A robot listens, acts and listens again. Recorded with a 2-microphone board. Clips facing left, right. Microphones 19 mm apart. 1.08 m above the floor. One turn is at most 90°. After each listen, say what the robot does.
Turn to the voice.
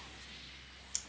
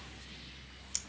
Keep listening.
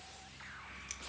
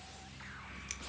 Keep listening.
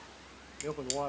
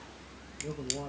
Turn 45° left.
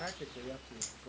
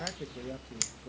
Found it: a man speaking, straight ahead, under 1 m away.